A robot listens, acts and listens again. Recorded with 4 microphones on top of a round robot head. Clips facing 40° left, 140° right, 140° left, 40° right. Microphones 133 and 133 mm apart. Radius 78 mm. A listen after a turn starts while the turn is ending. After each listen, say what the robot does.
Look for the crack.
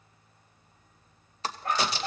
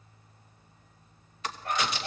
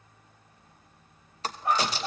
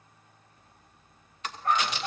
Turn 90° left.
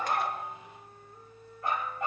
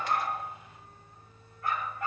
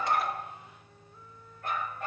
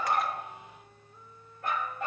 Facing where the crack came from. I can't hear it now.